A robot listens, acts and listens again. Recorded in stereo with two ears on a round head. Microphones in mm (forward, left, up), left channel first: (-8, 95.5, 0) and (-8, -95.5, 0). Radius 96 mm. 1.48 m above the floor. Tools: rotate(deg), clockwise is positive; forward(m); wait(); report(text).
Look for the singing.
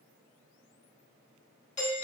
wait()
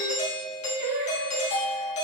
rotate(65)
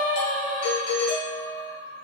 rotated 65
rotate(20)
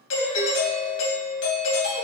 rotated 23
wait()
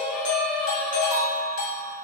report("Found it: singing, straight ahead, 2 to 4 m away.")